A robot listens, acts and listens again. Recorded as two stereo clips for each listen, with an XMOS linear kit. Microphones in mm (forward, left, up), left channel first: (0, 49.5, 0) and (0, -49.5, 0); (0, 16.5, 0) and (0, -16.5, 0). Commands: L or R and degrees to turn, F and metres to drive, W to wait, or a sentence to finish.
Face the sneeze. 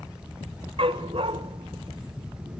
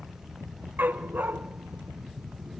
W
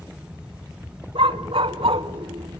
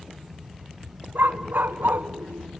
W
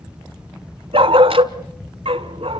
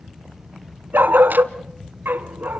I can't make out a sneeze to turn to.